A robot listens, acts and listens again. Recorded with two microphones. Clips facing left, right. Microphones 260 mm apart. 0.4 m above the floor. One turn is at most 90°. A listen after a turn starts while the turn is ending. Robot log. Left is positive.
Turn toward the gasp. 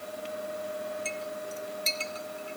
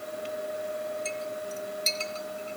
cmd idle
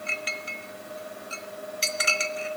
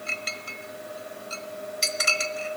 cmd idle
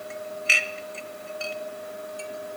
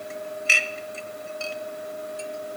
end: I can't make out a gasp to turn to.